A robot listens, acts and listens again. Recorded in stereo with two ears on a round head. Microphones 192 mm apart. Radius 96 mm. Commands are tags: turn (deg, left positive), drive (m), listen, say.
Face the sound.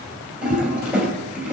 <turn deg="-30"/>
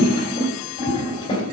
<turn deg="25"/>
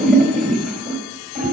<say>Facing the toilet flushing, 2 to 4 m away.</say>